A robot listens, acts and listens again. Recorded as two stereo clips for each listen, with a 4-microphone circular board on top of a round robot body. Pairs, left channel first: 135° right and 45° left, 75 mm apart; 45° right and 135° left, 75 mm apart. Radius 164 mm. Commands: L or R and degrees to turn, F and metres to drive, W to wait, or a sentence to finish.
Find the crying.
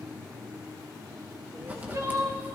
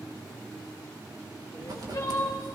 Facing the crying.